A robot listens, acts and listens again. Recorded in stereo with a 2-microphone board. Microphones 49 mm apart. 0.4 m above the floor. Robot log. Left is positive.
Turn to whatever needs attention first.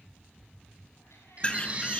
note: The baby crying: about 25° right or 155° right.
cmd yaw -25
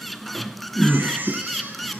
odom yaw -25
note: So it is at 130° right.
cmd yaw -130
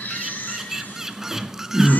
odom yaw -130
note: The baby crying is now 45° left.
cmd yaw +45
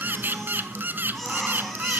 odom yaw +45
end: Facing the baby crying.